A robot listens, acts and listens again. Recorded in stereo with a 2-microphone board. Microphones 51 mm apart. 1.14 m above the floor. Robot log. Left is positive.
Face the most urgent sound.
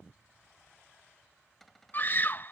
note: The scream: about 40° left or 140° left.
cmd yaw +40
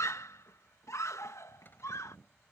note: So it is at 100° left.
cmd yaw +100
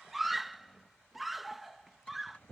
end: Found it: a scream, straight ahead.